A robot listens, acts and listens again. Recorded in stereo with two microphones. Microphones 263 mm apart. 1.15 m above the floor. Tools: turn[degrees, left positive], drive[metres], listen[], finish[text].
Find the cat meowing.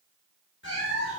Thought: The cat meowing: about 40° left or 140° left.
Action: turn[40]
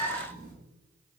Action: finish[Facing the cat meowing.]